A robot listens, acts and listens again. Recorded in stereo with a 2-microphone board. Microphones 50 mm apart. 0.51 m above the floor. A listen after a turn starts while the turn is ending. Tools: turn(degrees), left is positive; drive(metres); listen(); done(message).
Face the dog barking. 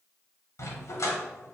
turn(degrees=90)
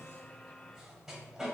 done("Found it: a dog barking, straight ahead, under 1 m away.")